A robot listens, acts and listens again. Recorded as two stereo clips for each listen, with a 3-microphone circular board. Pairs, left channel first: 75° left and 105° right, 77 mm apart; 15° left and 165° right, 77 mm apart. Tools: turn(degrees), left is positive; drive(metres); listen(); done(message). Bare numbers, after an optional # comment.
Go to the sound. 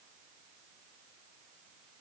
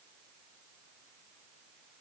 listen()
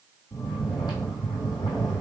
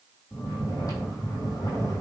# The snoring: 50° left.
turn(50)
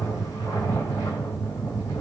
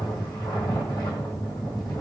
# The snoring is now 30° left.
turn(30)
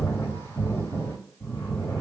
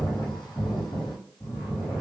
# The snoring is now 15° left.
turn(15)
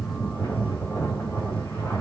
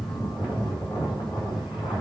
drive(1.0)
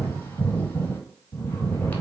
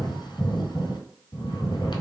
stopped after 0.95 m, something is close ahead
# The snoring is now 10° left.
turn(10)
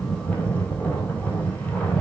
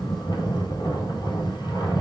done("I am next to the snoring.")